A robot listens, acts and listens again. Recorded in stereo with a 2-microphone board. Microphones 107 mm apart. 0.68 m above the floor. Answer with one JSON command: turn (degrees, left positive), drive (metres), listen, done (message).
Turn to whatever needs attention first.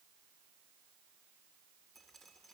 {"listen": true}
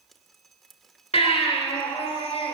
{"turn": 90}
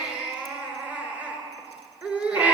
{"turn": -15}
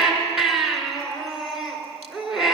{"done": "Facing the baby crying, 2 to 4 m away."}